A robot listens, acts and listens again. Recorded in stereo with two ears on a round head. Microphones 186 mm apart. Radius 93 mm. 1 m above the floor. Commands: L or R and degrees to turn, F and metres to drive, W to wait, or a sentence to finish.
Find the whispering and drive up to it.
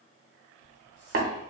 L70
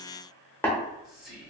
F1.0
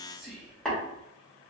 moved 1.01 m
F1.0
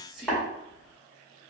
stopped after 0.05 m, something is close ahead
Arrived at the whispering, straight ahead.